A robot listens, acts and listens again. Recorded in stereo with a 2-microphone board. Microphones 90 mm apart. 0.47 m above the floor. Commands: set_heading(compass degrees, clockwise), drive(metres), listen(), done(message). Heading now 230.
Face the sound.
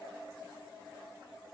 listen()
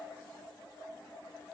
listen()
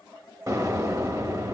set_heading(270)
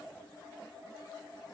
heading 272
listen()
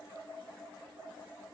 done("I heard an explosion, but can't make it out now. It was about 5° left or 100° right.")